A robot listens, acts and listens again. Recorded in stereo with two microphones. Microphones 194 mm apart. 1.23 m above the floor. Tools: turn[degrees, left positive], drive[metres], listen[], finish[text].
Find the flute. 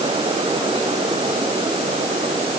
Action: listen[]
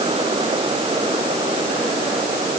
Action: listen[]
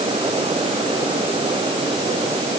Action: finish[I can't make out a flute to turn to.]